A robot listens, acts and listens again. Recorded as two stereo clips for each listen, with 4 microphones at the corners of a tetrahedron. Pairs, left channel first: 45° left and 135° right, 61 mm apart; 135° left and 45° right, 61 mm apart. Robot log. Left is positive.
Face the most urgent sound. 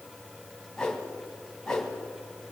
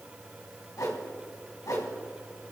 cmd idle
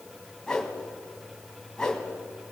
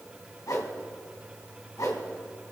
cmd idle
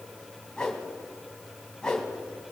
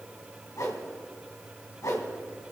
end: I can't make out anything urgent, only a whoosh.